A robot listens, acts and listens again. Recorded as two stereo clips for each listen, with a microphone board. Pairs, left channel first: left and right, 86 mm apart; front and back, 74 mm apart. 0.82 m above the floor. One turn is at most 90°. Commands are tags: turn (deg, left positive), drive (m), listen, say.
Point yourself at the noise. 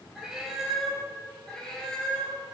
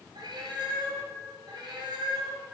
<turn deg="90"/>
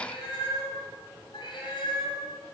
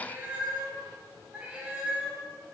<turn deg="90"/>
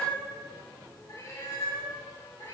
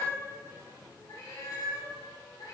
<turn deg="35"/>
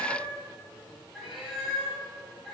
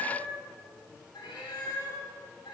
<say>Found it: a cat meowing, straight ahead, 2 to 4 m away.</say>